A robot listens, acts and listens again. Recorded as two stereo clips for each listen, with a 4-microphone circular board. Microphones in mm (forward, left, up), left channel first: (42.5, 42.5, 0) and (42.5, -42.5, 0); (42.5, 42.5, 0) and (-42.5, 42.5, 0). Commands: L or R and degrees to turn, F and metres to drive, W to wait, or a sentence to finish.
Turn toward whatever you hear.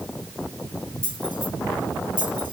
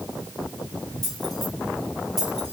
L95
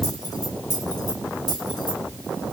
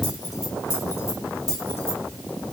L60
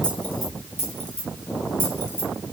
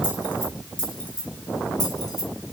L25
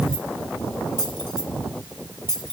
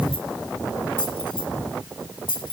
L10
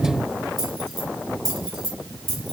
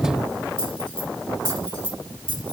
Found it: keys jangling, straight ahead.